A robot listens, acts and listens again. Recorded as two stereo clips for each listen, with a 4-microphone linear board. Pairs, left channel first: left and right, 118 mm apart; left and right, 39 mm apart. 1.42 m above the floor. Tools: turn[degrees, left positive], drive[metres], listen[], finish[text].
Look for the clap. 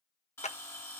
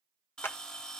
Action: turn[90]
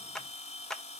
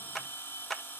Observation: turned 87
Action: finish[Found it: a clap, straight ahead.]